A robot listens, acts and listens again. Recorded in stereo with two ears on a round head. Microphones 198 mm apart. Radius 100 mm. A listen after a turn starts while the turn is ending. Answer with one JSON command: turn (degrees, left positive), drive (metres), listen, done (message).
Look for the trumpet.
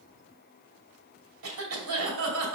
{"listen": true}
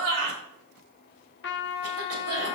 {"turn": 55}
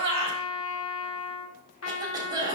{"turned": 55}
{"turn": 70}
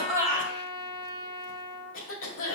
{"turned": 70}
{"turn": -20}
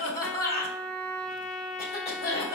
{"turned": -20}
{"done": "Found it: a trumpet, straight ahead."}